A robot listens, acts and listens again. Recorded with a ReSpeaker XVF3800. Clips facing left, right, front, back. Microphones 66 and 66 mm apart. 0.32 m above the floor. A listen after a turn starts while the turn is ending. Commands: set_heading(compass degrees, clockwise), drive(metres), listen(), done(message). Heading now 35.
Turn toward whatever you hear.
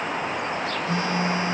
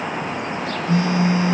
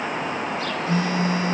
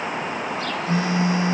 set_heading(280)
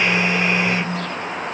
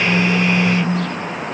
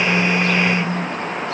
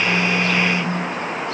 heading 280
set_heading(265)
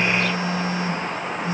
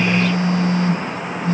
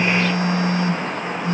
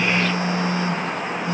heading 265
done("Found it: a phone buzzing, straight ahead, 2 to 4 m away.")